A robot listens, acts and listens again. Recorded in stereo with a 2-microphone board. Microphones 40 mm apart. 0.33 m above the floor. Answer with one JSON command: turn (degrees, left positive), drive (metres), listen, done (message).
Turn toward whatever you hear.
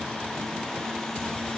{"listen": true}
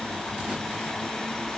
{"listen": true}
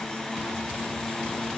{"done": "I can't make out anything to turn to."}